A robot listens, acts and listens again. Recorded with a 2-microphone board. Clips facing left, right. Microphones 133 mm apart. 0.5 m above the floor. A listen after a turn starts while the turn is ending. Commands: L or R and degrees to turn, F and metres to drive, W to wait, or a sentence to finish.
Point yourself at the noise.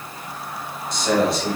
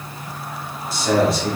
L30
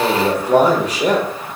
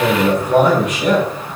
L145
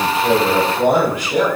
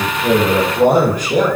R45
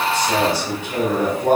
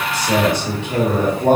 R30
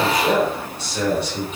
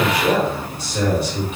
R10
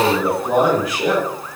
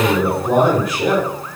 Found it: a man speaking, straight ahead, 1 to 2 m away.